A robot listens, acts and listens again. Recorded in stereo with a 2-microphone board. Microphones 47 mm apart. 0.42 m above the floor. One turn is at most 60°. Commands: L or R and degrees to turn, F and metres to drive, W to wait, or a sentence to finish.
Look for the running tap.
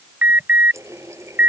R60
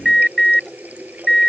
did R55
R35
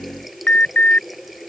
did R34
Facing the running tap.